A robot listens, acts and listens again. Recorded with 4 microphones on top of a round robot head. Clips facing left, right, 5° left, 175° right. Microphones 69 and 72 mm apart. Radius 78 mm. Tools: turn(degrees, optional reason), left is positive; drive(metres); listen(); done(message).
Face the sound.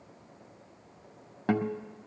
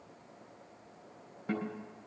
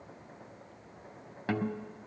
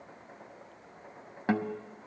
turn(degrees=120, reason="The guitar: 120° left.")
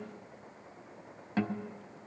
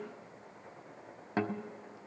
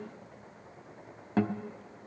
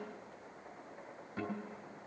turn(degrees=-25, reason="The guitar is now 25° right.")
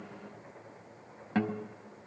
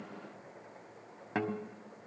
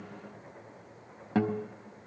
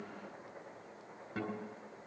done("Facing the guitar.")